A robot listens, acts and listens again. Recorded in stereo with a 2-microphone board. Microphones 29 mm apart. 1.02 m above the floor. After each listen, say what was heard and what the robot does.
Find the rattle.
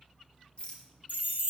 The rattle: about 30° left or 150° left. Turn 30° left.
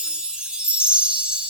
Keep listening.
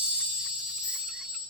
Keep listening.
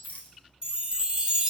So it is at 115° left. Turn 115° left.
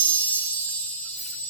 Keep listening.
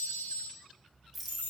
Found it: a rattle, straight ahead, under 1 m away.